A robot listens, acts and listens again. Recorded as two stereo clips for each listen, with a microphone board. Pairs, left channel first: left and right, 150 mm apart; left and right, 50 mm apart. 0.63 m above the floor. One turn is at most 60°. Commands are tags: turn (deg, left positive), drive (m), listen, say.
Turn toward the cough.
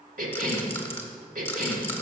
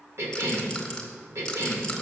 <turn deg="-60"/>
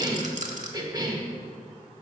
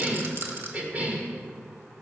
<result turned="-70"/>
<turn deg="-30"/>
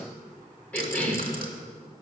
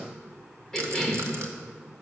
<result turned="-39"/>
<turn deg="10"/>
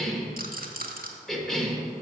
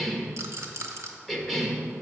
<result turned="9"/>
<say>Found it: a cough, straight ahead, 1 to 2 m away.</say>